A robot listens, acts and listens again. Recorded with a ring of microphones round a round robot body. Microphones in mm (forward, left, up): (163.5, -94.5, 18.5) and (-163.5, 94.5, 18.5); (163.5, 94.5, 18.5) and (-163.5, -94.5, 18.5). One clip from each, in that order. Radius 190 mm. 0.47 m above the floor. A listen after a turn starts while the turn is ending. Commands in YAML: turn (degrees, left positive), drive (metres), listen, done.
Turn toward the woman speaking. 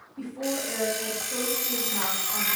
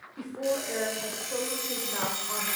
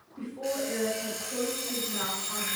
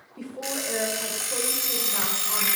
turn: -165
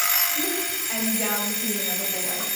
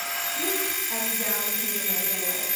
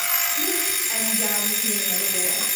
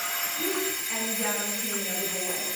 listen: true
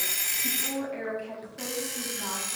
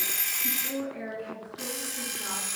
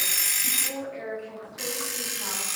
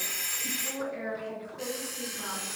turn: -50
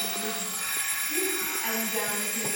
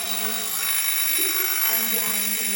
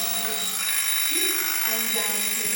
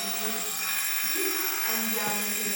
listen: true
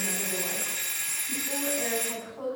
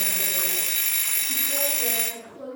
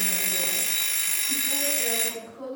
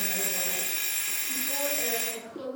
turn: -20
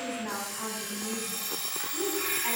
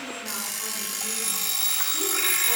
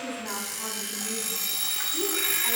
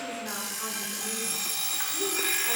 listen: true
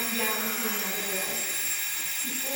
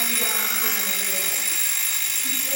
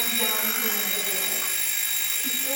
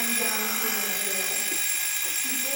listen: true
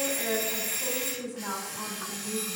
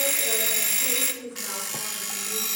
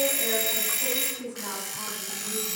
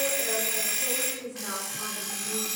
done: "Found it: a woman speaking, straight ahead, 2 to 4 m away."